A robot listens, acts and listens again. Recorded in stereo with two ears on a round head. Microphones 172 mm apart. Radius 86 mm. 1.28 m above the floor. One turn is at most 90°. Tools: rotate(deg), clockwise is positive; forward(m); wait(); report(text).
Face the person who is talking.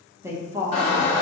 rotate(30)
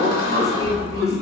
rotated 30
wait()
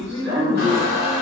rotate(-15)
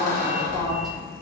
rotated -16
wait()
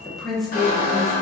report("Facing the woman speaking, under 1 m away.")